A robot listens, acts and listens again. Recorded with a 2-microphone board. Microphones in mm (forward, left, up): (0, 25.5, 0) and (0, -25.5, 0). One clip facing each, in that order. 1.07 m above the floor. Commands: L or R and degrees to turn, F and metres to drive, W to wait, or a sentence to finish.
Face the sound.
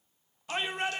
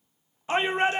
R30
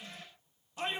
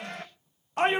R120
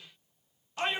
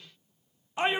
R20
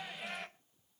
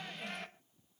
Found it: a shout, straight ahead, 1 to 2 m away.